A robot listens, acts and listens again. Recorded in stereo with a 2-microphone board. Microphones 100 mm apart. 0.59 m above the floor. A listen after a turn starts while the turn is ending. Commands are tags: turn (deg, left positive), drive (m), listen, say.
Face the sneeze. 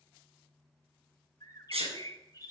<turn deg="-90"/>
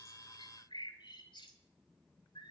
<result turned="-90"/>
<say>Facing where the sneeze came from. I can't hear it now.</say>